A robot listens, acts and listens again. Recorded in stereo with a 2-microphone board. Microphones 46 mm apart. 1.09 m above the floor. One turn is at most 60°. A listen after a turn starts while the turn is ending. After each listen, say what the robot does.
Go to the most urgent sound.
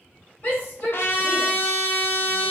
Turn 45° left.
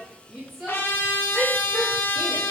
Drive 1.0 m forward.
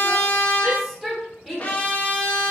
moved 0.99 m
Drive 1.0 m forward.
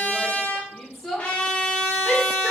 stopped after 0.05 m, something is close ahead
Arrived at the shout, straight ahead.